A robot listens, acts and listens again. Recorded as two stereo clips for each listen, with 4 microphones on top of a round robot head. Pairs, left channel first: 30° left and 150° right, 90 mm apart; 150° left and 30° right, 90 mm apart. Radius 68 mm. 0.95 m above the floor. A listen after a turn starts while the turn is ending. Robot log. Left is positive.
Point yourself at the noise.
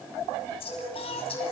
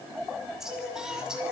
note: The singing: 50° left.
cmd yaw +50
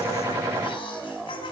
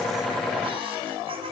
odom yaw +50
cmd idle
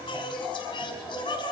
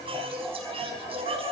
note: The singing is now 10° right.
cmd yaw -10
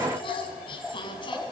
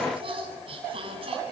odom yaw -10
end: Found it: singing, straight ahead, over 4 m away.